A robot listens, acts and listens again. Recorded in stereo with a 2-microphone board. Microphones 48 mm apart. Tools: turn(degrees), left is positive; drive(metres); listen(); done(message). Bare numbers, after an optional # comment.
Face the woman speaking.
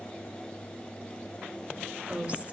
# The woman speaking: about 25° right or 155° right.
turn(-25)
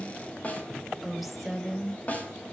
done("Found it: a woman speaking, straight ahead.")